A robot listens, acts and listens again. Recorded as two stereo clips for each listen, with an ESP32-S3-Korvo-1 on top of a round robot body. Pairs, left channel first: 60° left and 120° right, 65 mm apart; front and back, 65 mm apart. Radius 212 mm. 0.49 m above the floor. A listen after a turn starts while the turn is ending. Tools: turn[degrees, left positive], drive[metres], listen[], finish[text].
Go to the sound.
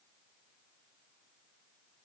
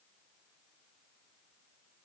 Action: listen[]
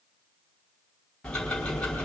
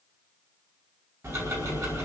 Thought: The ticking: 135° left.
Action: turn[135]
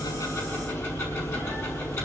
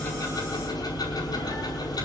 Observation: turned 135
Thought: The ticking is now 10° left.
Action: turn[10]
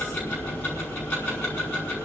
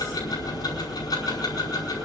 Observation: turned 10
Action: drive[1.0]
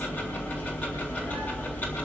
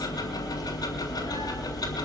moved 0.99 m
Action: drive[1.0]
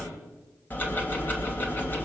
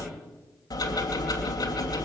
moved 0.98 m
Action: drive[1.0]
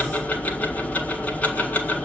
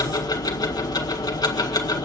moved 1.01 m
Action: drive[1.0]
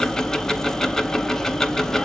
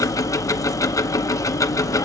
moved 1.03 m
Thought: The ticking is now 20° right.
Action: turn[-20]
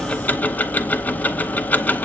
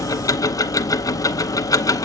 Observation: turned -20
Action: drive[1.0]
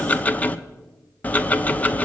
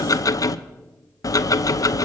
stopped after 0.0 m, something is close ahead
Action: finish[Arrived at the ticking, straight ahead.]